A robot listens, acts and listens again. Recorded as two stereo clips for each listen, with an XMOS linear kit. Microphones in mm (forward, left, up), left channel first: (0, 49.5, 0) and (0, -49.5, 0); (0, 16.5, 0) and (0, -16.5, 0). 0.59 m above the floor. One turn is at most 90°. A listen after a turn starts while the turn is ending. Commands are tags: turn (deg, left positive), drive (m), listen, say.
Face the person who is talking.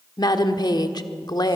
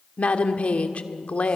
<turn deg="45"/>
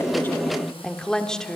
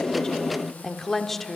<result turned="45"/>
<turn deg="10"/>
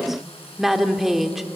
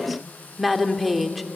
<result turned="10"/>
<say>Found it: a woman speaking, straight ahead.</say>